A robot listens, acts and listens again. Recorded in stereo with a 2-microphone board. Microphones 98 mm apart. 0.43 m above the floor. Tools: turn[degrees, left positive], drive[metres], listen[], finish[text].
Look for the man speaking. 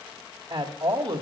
Thought: The man speaking: about 55° right or 125° right.
Action: turn[-55]
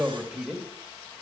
Action: finish[Found it: a man speaking, straight ahead.]